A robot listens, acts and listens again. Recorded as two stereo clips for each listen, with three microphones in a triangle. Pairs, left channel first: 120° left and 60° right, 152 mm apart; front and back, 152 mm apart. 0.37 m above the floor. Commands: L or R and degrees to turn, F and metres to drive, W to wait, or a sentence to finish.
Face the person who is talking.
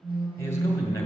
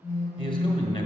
L50
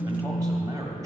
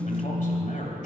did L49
Found it: a man speaking, straight ahead, 1 to 2 m away.